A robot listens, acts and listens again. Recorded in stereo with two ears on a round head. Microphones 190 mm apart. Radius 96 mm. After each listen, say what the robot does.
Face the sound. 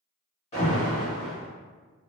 Turn 30° left.
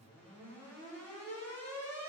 Turn 10° left.
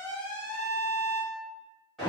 Found it: an alarm, straight ahead, 1 to 2 m away.